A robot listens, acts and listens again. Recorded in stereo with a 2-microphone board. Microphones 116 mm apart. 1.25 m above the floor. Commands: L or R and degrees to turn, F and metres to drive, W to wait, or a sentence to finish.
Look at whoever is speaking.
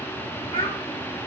L45
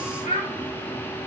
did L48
L85
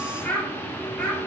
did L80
Facing the child speaking, 2 to 4 m away.